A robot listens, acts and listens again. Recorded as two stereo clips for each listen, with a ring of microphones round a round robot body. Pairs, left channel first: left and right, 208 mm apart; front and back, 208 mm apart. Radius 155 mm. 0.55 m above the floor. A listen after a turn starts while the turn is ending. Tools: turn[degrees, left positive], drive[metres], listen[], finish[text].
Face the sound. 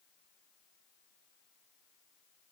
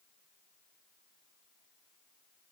Action: listen[]
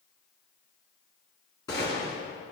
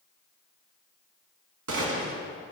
Thought: The gunshot: 170° left.
Action: turn[170]
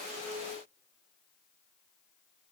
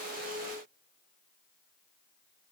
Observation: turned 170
Action: finish[Facing where the gunshot came from. I can't hear it now.]